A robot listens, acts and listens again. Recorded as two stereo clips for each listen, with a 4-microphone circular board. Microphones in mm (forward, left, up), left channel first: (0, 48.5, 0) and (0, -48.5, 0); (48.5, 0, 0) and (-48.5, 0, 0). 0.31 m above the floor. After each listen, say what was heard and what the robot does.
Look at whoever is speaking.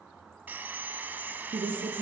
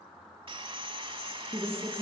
The woman speaking: 115° right. Turn 115° right.
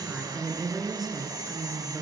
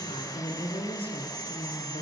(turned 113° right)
Facing the woman speaking, over 4 m away.